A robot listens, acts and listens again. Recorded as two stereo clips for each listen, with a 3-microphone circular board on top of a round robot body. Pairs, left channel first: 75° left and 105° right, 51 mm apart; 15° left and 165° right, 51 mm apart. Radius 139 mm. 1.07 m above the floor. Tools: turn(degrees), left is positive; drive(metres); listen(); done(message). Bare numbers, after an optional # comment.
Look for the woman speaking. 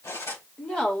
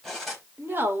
# The woman speaking: 145° left.
turn(145)
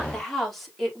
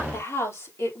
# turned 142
# The woman speaking is now 10° right.
turn(-10)
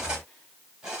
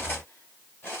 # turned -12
listen()
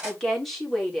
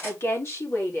# The woman speaking is now 10° right.
turn(-10)
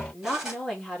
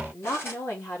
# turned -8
# The woman speaking is now 10° right.
turn(-10)
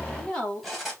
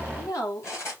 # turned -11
done("Facing the woman speaking, over 4 m away.")